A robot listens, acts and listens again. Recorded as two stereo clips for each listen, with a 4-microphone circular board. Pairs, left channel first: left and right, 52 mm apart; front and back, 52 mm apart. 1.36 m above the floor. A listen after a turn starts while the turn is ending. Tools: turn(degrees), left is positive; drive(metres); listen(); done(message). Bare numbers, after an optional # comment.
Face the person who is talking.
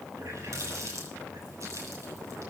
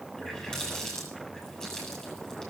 listen()
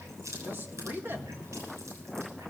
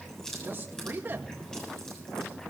# The man speaking: 135° right.
turn(-135)
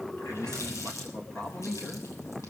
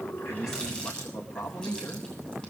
# The man speaking is now 15° left.
turn(15)
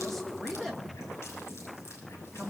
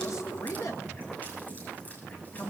done("Found it: a man speaking, straight ahead.")